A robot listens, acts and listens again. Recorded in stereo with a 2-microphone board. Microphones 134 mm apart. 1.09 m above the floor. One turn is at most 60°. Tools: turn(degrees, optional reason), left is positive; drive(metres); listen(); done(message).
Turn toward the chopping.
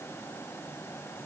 listen()
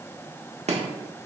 turn(degrees=-55, reason="The chopping: about 55° right or 125° right.")
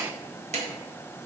turn(degrees=-60, reason="So it is at 60° right.")
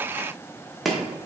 done("Facing the chopping, 1 to 2 m away.")